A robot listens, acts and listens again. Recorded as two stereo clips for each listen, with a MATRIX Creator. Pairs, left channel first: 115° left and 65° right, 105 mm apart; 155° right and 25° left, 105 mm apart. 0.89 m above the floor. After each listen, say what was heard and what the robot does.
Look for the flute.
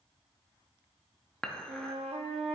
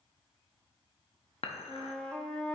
The flute: 75° right. Turn 75° right.
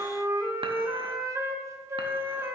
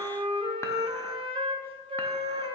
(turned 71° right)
Found it: a flute, straight ahead.